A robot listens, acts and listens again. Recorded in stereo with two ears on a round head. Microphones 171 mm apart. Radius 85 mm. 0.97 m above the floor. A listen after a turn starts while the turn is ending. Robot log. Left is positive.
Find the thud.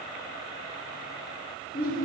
cmd idle
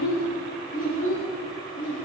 cmd idle
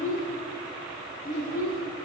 end: I can't make out a thud, only a child speaking.